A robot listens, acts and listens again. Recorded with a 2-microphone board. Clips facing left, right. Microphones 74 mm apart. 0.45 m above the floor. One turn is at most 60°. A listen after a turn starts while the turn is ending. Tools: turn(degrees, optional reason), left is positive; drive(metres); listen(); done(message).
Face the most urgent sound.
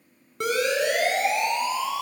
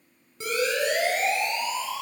turn(degrees=60, reason="The siren: about 60° left or 120° left.")
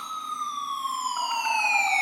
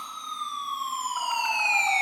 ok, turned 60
done("Found it: a siren, straight ahead.")